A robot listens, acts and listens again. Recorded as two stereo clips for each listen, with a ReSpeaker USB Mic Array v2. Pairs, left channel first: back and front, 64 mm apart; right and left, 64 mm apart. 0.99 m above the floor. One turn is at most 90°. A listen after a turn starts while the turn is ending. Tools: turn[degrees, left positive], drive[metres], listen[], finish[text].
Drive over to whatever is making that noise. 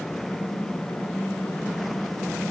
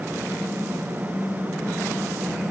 Thought: The typing on a keyboard: 110° right.
Action: turn[-90]
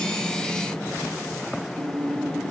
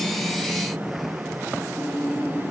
Thought: The typing on a keyboard is now 20° right.
Action: turn[-20]
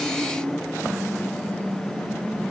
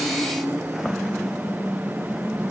Action: drive[1.0]
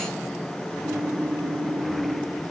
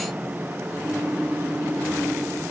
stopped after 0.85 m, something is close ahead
Thought: The typing on a keyboard is now 10° left.
Action: turn[10]
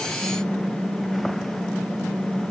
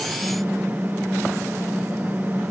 Action: finish[Arrived at the typing on a keyboard, straight ahead.]